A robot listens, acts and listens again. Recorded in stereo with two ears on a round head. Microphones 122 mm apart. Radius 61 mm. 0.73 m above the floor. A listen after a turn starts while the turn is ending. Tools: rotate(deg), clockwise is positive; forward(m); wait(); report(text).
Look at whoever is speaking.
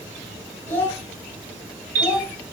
rotate(-20)
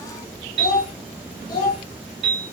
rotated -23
rotate(-140)
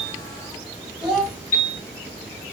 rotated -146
report("Facing the child speaking, 1 to 2 m away.")